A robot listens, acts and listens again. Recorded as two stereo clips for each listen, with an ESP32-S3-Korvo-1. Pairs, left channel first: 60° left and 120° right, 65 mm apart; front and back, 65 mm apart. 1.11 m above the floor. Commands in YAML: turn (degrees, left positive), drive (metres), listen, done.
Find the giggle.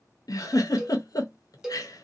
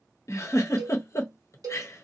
turn: 40
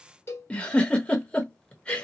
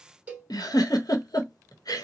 turn: -10
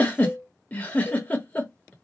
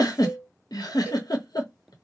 done: "Found it: a giggle, straight ahead, under 1 m away."